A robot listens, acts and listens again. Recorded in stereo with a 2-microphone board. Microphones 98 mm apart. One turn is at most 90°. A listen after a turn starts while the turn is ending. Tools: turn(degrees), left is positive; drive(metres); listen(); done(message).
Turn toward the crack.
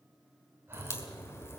turn(degrees=25)
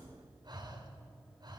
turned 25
listen()
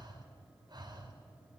done("I heard a crack, but can't make it out now. It was about straight ahead or 130° left.")